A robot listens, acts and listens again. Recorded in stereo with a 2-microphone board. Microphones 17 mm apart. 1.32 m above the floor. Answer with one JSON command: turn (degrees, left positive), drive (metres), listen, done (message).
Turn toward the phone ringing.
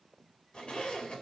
{"listen": true}
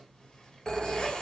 {"turn": 45}
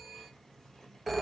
{"done": "Found it: a phone ringing, straight ahead, 1 to 2 m away."}